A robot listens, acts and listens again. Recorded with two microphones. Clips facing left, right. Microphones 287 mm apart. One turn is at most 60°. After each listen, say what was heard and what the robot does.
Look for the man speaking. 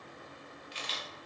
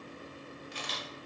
Keep listening.
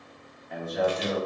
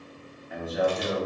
Turn 30° left.
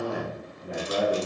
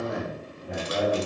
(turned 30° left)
So it is at 140° left. Turn 60° left.
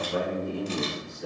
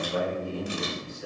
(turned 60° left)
The man speaking is now 55° left. Turn 55° left.
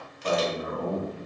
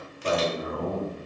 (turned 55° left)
The man speaking is now 20° right. Turn 20° right.
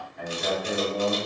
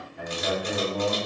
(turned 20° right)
Found it: a man speaking, straight ahead, 2 to 4 m away.